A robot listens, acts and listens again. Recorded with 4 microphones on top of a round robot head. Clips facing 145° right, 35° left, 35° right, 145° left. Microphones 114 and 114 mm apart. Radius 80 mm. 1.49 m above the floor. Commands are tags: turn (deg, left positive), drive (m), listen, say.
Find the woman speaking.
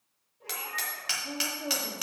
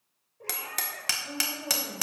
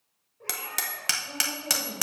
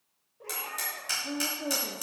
<turn deg="150"/>
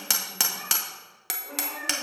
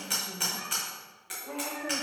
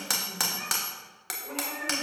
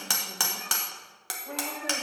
<listen/>
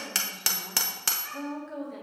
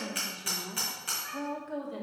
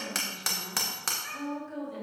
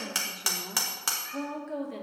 <turn deg="115"/>
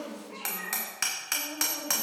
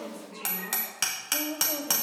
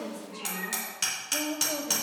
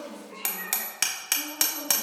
<turn deg="-10"/>
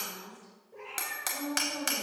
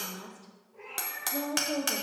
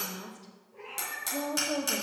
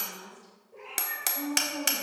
<say>Facing the woman speaking, 1 to 2 m away.</say>